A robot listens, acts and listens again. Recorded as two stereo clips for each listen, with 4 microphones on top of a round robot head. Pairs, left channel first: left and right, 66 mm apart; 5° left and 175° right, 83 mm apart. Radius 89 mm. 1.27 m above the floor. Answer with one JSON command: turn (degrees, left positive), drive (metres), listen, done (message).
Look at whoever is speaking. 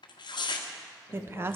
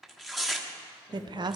{"turn": -145}
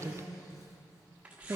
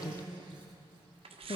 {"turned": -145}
{"turn": -40}
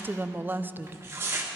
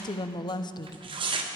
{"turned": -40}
{"turn": -30}
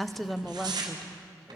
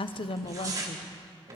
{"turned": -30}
{"done": "Facing the woman speaking, under 1 m away."}